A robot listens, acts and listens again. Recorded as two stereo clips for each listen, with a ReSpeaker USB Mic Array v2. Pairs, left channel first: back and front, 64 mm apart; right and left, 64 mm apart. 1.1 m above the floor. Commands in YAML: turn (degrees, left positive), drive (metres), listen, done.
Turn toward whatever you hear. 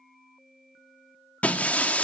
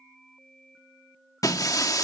turn: -115
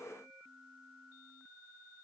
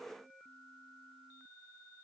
done: "I heard breaking glass from this way, but can't make it out now."